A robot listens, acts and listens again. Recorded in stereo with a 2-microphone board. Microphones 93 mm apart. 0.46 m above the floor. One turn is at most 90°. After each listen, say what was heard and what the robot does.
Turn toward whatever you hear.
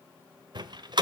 The door slam: about 60° right or 120° right. Turn 60° right.
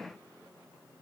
Keep listening.
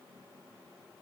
I heard a door slam, but can't make it out now. It was about straight ahead or 60° right.